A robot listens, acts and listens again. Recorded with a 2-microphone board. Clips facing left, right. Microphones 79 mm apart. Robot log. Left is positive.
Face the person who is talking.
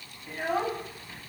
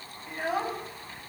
cmd yaw -30
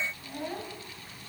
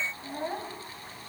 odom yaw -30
note: So it is at 145° right.
cmd yaw -145
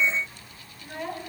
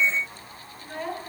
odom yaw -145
end: Facing the child speaking, 2 to 4 m away.